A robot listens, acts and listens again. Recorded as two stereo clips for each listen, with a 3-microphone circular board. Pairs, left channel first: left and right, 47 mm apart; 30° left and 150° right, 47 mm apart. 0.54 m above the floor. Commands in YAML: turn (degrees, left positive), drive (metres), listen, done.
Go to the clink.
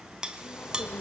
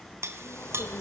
turn: -165
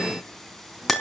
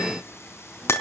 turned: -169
drive: 1.0
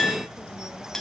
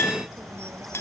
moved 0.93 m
turn: 10
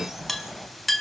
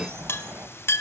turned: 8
drive: 1.0
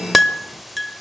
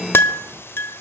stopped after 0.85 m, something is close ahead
done: "Arrived at the clink, straight ahead."